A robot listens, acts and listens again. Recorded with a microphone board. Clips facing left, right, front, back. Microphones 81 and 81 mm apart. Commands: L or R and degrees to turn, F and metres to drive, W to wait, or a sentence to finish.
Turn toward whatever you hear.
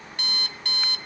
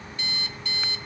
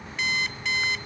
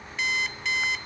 L90
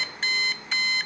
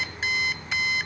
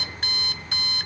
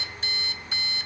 Found it: an alarm clock, straight ahead.